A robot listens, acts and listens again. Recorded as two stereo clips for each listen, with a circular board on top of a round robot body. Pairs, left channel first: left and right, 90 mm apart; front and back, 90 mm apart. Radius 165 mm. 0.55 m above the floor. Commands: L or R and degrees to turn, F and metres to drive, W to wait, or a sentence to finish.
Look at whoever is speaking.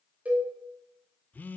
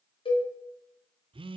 W
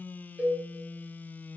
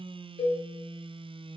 W
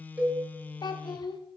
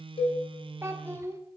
L125
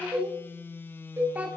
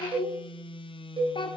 R15
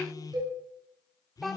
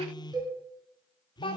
Found it: a child speaking, straight ahead.